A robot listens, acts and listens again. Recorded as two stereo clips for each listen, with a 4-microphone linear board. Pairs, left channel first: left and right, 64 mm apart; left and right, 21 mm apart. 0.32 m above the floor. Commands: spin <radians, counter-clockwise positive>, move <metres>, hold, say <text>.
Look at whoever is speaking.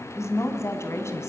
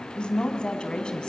spin 0.79
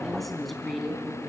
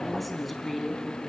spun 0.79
say Found it: a woman speaking, straight ahead.